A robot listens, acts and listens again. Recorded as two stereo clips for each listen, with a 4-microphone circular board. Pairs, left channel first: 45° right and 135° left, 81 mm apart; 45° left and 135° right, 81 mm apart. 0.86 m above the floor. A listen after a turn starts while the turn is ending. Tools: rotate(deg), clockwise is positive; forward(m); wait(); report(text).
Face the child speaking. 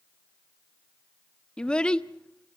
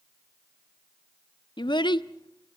rotate(-35)
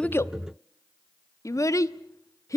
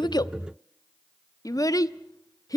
report("Facing the child speaking.")